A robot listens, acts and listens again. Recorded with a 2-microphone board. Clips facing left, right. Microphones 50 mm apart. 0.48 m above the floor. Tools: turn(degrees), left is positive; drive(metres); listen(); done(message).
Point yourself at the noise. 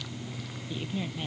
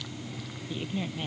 turn(degrees=-30)
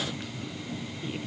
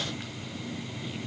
listen()
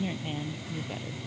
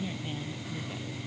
turn(degrees=20)
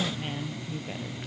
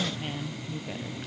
done("Found it: a woman speaking, straight ahead.")